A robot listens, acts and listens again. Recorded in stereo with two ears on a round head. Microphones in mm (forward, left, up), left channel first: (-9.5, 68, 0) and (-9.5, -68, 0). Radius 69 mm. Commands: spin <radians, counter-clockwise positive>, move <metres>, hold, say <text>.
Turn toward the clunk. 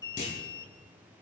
spin 0.96
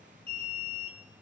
hold
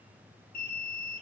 say I heard a clunk, but can't make it out now. It was about straight ahead or 70° left.